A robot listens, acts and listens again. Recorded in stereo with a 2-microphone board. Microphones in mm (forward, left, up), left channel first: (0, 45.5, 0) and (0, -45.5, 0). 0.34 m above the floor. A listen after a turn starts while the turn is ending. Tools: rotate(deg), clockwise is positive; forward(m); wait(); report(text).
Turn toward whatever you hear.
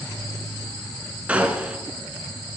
rotate(30)
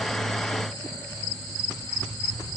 wait()
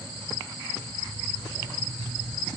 report("I heard a gunshot, but can't make it out now. It was about 15° left or 135° right.")